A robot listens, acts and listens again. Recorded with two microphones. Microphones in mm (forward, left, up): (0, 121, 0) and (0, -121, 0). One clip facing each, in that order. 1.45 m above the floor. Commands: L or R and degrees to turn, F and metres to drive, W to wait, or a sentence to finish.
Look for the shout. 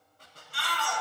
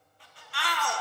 R70
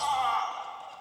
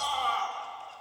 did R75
R35
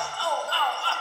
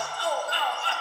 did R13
R20
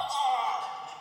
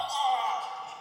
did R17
Found it: a shout, straight ahead.